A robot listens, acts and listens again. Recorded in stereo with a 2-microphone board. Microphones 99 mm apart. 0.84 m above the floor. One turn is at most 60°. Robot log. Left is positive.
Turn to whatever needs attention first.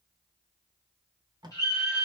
note: The scream: about 35° left or 145° left.
cmd yaw +35
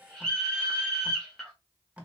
end: Found it: a scream, straight ahead.